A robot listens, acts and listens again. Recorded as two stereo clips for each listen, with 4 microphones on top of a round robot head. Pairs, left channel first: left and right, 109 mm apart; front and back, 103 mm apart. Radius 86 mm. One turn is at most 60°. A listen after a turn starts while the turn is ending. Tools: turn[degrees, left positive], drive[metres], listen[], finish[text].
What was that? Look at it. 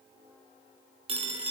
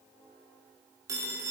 Thought: The phone ringing: 120° right.
Action: turn[-60]
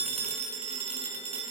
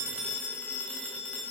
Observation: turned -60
Thought: The phone ringing is now 80° right.
Action: turn[-60]
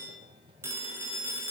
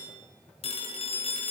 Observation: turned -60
Thought: The phone ringing is now 20° right.
Action: turn[-20]
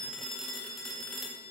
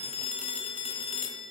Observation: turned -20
Action: finish[Found it: a phone ringing, straight ahead, 1 to 2 m away.]